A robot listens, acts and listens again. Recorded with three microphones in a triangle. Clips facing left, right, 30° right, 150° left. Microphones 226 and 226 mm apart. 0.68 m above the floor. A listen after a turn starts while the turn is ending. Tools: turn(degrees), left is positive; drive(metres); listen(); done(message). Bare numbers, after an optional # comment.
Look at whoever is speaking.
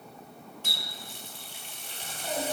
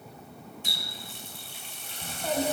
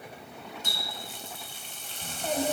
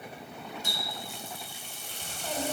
# The child speaking: 65° right.
turn(-65)
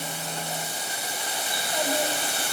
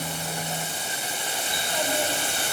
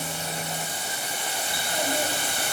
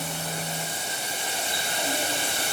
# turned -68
listen()
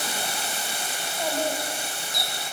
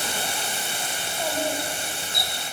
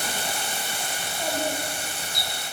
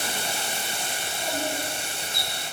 listen()
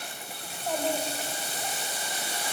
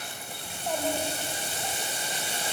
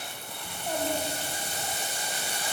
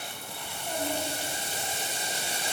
done("Facing the child speaking.")